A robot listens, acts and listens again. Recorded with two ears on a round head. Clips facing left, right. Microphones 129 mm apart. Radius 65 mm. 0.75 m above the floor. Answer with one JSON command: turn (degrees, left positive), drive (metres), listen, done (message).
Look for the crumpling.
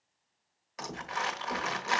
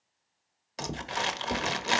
{"turn": -30}
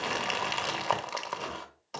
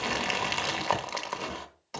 {"done": "Facing the crumpling."}